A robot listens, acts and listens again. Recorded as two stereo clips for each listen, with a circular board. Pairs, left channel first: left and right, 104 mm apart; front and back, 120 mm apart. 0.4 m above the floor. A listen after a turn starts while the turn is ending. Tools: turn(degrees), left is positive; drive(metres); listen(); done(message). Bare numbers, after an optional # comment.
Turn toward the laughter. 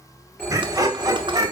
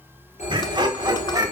# The laughter: 125° right.
turn(-125)
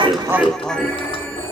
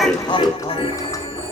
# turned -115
# The laughter is now 15° left.
turn(15)
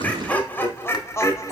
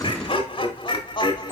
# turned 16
# The laughter is now 40° left.
turn(40)
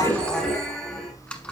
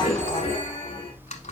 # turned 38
# The laughter is now 15° left.
turn(15)
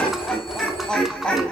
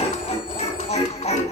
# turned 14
# The laughter is now 10° left.
turn(10)
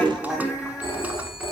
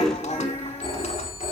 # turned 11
done("Found it: laughter, straight ahead.")